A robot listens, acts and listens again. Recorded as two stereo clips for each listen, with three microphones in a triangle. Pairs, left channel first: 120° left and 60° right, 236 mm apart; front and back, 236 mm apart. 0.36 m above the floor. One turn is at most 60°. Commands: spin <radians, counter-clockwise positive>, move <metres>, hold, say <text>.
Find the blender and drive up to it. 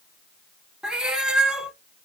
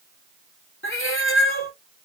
hold
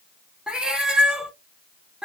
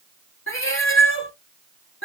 hold
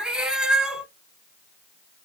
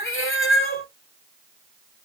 say I can't make out a blender to turn to.